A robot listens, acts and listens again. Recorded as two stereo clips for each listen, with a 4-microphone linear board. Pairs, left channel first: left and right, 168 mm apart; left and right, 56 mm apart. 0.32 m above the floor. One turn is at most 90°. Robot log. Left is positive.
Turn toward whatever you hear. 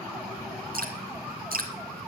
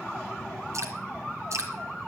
note: The dripping: about 65° right or 115° right.
cmd yaw -65
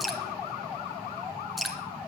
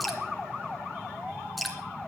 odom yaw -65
end: Facing the dripping, 2 to 4 m away.